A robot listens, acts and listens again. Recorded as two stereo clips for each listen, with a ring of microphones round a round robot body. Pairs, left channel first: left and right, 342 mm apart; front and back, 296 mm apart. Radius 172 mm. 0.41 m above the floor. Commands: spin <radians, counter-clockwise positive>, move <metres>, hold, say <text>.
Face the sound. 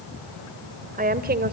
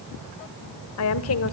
spin -0.61
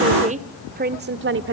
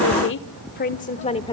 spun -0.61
spin -1.13
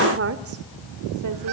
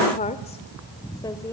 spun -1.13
spin -1.05
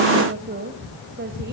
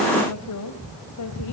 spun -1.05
spin -0.52
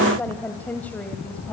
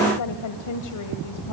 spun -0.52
say Facing the woman speaking.